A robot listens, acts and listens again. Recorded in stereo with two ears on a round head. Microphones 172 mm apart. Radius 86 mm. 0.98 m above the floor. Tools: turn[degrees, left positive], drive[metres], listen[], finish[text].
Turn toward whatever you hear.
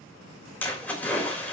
Action: turn[30]
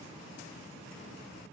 Action: listen[]
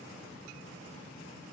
Action: finish[I heard a splash, but can't make it out now. It was about 20° right or 140° left.]